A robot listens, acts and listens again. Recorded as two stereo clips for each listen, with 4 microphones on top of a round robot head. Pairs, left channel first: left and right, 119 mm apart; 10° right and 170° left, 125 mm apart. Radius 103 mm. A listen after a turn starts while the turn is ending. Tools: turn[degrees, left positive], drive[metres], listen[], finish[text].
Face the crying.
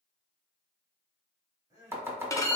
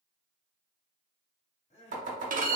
Thought: The crying: 30° right.
Action: turn[-30]
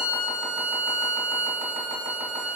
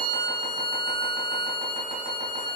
Action: listen[]
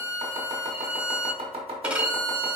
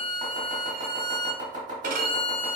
Action: listen[]
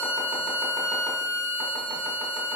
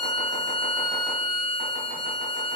Action: finish[I heard crying from this way, but can't make it out now.]